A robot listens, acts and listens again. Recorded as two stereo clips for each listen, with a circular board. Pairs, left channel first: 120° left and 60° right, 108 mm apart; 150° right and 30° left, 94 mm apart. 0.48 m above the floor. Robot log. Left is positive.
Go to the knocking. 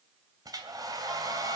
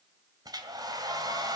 cmd idle
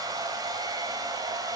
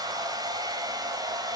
cmd idle
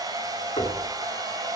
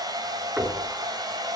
note: The knocking: 110° left.
cmd yaw +110
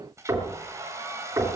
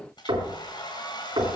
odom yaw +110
cmd fwd 1.0
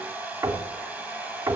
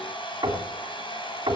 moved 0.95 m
cmd fwd 1.0
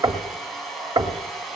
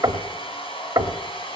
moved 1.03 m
note: The knocking is now 20° right.
cmd yaw -20
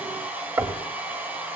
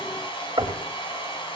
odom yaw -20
cmd fwd 1.0
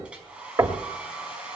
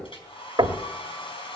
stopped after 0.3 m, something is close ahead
end: I am next to the knocking.